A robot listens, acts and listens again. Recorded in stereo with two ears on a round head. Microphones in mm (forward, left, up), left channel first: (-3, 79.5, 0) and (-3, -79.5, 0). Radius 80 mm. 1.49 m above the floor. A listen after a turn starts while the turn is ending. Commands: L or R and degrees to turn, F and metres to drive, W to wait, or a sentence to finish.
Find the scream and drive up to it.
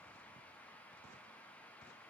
W
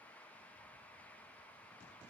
W
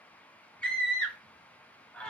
L30
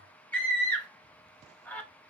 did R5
L30
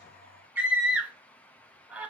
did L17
R10
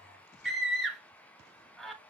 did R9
F1.0
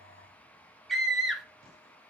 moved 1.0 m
F1.0
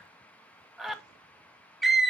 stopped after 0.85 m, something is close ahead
I am next to the scream.